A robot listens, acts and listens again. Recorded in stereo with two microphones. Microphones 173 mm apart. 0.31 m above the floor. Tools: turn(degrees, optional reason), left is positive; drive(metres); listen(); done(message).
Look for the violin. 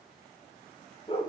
listen()
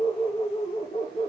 listen()
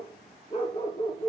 done("I can't make out a violin, only a dog barking.")